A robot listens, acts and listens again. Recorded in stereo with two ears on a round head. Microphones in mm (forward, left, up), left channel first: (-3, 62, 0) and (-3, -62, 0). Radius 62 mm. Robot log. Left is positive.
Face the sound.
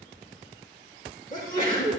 note: The sneeze: about 75° right or 105° right.
cmd yaw -75
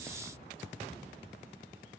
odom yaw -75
cmd idle
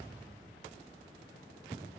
end: I heard a sneeze, but can't make it out now. It was about straight ahead or 30° right.